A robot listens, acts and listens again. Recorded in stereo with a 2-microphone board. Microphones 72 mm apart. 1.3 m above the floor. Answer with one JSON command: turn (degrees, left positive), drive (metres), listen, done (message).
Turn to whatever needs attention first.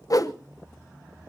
{"listen": true}
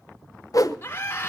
{"turn": 30}
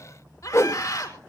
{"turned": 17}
{"turn": 135}
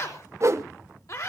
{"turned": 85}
{"turn": 50}
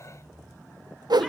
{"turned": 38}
{"turn": 10}
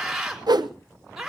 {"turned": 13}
{"done": "Facing the scream, over 4 m away."}